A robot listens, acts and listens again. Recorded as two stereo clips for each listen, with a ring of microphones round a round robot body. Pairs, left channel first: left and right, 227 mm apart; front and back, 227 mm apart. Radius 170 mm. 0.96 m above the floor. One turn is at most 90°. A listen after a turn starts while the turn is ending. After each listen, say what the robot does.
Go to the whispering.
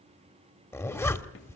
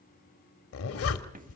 Keep listening.
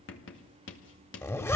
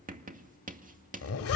Keep listening.
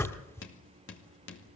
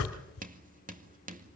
I can't make out whispering to turn to.